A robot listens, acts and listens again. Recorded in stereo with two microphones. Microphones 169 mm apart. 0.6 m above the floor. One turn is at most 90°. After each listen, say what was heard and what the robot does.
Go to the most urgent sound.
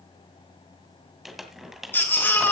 Turn 30° left.
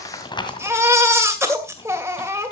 So it is at 15° right. Turn 15° right.
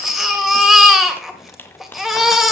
Drive 1.0 m forward.
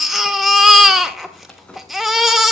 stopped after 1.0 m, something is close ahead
Arrived at the baby crying, straight ahead.